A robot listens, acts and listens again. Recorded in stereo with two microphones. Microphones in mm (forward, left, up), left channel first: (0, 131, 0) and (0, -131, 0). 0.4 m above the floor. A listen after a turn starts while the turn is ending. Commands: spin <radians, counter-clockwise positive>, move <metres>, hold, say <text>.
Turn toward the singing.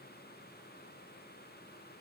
hold
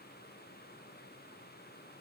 hold
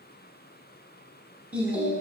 spin -0.52
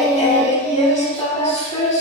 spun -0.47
spin 0.44
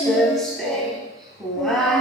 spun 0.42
say Found it: singing, straight ahead.